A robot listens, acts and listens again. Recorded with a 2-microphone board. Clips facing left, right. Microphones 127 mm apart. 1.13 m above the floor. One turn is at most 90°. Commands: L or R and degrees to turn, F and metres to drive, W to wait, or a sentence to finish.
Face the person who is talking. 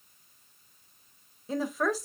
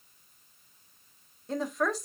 L30
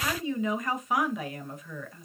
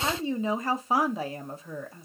R30
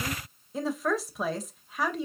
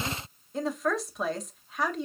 Facing the woman speaking.